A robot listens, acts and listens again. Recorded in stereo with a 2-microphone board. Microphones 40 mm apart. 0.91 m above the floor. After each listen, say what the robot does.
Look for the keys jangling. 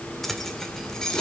Turn 30° left.
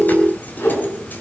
Keep listening.
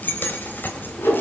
Turn 130° left.
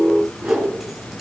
Keep listening.
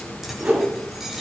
Keep listening.
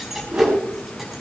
Found it: keys jangling, straight ahead, over 4 m away.